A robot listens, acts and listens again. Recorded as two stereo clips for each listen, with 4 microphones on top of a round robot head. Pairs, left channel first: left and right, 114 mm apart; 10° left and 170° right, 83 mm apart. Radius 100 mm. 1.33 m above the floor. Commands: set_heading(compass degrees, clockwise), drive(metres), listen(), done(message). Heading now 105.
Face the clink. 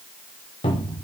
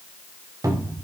listen()
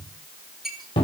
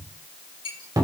done("Found it: a clink, straight ahead, over 4 m away.")